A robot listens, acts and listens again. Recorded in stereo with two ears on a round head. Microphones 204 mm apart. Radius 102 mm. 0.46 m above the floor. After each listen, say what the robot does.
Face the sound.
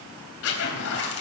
Turn 70° left.
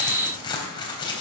Turn 20° left.
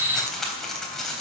Facing the zipper, 2 to 4 m away.